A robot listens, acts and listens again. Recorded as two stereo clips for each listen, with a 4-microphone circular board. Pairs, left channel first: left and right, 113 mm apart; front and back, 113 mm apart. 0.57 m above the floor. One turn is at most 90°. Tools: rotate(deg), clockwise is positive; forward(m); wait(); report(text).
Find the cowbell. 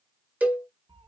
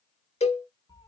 rotate(15)
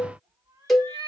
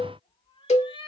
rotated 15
report("Found it: a cowbell, straight ahead.")